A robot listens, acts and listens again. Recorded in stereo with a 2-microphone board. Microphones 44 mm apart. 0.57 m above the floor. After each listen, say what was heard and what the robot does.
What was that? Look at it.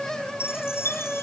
The chime: about 75° left or 105° left. Turn 75° left.
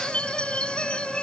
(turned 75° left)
So it is at 25° left. Turn 25° left.
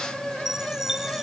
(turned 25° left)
The chime is now 10° right. Turn 10° right.
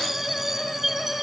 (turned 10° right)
Found it: a chime, straight ahead.